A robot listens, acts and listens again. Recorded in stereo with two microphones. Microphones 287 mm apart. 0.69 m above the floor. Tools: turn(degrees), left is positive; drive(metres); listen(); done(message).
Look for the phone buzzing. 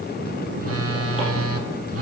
turn(degrees=-50)
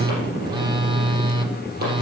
turn(degrees=-20)
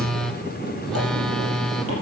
done("Facing the phone buzzing, under 1 m away.")